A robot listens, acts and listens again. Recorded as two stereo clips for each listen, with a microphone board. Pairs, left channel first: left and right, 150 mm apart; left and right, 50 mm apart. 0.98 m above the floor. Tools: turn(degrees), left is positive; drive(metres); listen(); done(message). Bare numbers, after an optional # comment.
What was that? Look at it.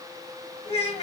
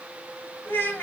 # The child speaking: about 40° left or 140° left.
turn(40)
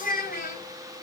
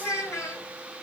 # So it is at 105° left.
turn(105)
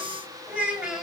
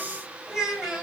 done("Found it: a child speaking, straight ahead, over 4 m away.")